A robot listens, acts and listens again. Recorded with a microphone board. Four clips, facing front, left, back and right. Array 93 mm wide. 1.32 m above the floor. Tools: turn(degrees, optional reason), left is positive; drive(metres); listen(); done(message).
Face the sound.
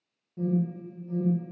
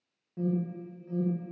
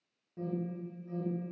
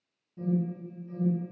turn(degrees=105, reason="The alarm: 105° left.")
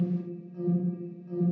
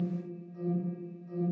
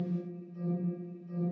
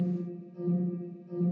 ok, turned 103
done("Found it: an alarm, straight ahead.")